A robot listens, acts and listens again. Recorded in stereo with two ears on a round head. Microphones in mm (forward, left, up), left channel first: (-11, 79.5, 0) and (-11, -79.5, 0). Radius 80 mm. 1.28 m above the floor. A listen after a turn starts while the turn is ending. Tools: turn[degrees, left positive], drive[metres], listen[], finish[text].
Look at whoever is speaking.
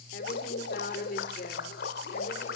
Thought: The woman speaking: about 45° left or 135° left.
Action: turn[45]
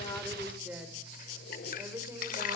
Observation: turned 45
Thought: So it is at 15° right.
Action: turn[-15]
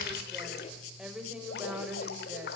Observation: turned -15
Thought: The woman speaking is now 10° right.
Action: turn[-10]
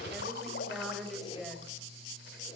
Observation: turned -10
Action: finish[Found it: a woman speaking, straight ahead, over 4 m away.]